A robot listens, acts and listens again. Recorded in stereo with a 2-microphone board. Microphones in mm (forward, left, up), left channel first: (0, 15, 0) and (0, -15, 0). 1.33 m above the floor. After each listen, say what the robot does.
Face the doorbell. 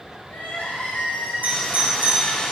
Turn 90° right.
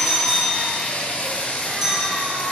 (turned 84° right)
Turn 15° right.
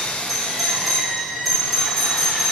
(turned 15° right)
Found it: a doorbell, straight ahead.